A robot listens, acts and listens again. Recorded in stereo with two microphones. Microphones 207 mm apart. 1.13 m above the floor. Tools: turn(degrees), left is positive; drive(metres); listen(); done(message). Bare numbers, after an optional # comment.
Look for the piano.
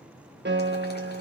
# The piano: about 60° right or 120° right.
turn(-60)
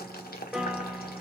done("Found it: a piano, straight ahead, 1 to 2 m away.")